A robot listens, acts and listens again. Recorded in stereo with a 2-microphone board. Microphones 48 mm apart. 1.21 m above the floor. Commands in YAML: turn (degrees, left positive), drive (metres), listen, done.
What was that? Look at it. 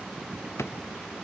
turn: 65
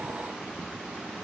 listen: true
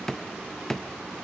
turn: 15
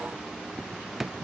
done: "Facing the drawer."